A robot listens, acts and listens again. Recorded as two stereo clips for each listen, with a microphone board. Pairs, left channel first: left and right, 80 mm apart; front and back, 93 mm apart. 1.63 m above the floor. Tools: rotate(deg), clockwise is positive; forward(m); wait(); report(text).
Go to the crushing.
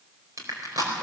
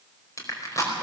rotate(50)
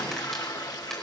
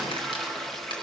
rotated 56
wait()
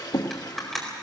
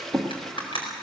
forward(1.0)
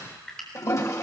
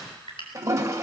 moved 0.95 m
forward(1.0)
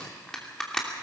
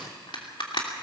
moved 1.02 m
rotate(-10)
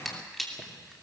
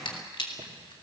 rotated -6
forward(1.0)
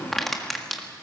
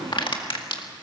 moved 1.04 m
forward(1.0)
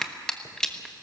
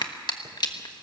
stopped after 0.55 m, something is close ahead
rotate(-10)
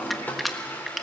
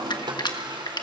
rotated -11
report("Arrived at the crushing, straight ahead.")